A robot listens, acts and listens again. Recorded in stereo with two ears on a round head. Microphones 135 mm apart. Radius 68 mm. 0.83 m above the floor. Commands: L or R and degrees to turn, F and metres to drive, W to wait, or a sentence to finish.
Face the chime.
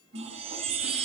R40
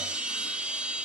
R10
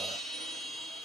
Found it: a chime, straight ahead, under 1 m away.